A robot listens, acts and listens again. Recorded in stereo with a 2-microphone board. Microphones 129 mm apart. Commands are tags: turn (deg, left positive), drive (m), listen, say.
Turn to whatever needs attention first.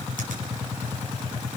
<listen/>
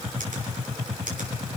<listen/>
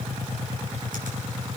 <say>I can't make out anything urgent, only a finger snap.</say>